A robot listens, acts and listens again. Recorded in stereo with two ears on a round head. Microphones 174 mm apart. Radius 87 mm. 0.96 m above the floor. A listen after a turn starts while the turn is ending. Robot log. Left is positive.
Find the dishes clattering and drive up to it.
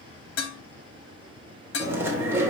note: The dishes clattering: about 70° left or 110° left.
cmd yaw +70
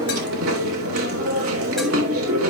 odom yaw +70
cmd idle
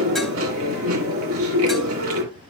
cmd idle
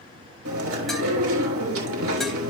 end: I heard dishes clattering, but can't make it out now. It was about straight ahead or 40° left. I did not reach it.